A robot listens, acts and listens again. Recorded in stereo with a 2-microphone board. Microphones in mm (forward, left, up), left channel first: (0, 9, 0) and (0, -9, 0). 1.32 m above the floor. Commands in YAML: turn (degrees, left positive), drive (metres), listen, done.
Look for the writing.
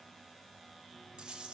listen: true
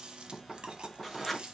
turn: 30
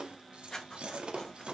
turn: 145
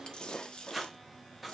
done: "Facing the writing."